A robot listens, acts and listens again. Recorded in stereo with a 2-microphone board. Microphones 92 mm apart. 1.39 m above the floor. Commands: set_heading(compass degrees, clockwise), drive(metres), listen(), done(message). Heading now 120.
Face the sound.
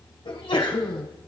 set_heading(30)
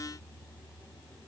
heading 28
done("Facing where the sneeze came from. I can't hear it now.")